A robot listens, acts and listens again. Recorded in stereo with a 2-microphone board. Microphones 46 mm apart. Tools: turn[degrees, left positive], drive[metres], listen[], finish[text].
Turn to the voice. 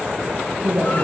Thought: The woman speaking: about 50° right or 130° right.
Action: turn[-50]
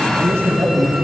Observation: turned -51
Thought: So it is at 75° right.
Action: turn[-75]
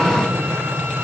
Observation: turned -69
Action: listen[]
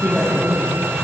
Action: finish[Found it: a woman speaking, straight ahead.]